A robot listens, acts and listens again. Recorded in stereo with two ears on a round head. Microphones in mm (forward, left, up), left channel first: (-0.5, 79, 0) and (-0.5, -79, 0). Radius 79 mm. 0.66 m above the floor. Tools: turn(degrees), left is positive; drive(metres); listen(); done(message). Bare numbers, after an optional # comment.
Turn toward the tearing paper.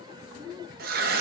# The tearing paper: about 55° right or 125° right.
turn(-55)
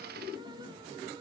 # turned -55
listen()
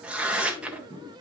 done("Found it: tearing paper, straight ahead.")